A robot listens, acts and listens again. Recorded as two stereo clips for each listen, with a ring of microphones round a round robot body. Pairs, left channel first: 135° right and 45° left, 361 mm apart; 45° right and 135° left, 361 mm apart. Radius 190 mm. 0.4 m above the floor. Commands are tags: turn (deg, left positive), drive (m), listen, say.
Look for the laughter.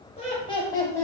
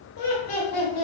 <turn deg="-55"/>
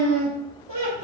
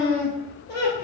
<turn deg="15"/>
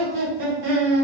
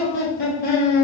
<turn deg="20"/>
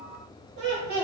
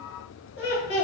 <turn deg="10"/>
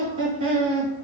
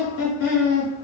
<turn deg="10"/>
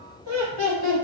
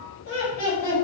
<say>Found it: laughter, straight ahead.</say>